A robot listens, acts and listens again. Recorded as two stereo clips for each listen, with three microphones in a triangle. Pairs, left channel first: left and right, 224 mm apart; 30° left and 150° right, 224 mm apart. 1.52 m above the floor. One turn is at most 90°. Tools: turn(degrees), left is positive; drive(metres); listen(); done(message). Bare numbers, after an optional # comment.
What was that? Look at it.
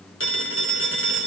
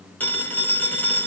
# The phone ringing: 110° left.
turn(90)
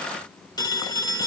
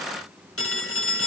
# The phone ringing is now 20° left.
turn(20)
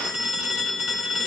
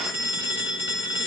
done("Found it: a phone ringing, straight ahead.")